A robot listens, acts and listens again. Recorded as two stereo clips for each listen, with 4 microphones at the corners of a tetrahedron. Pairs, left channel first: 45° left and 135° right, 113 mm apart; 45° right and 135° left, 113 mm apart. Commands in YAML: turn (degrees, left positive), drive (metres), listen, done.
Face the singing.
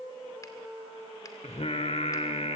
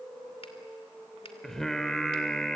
turn: 40
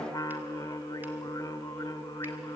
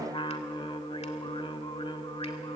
turn: -10
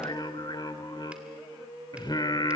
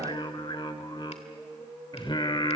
done: "Found it: singing, straight ahead."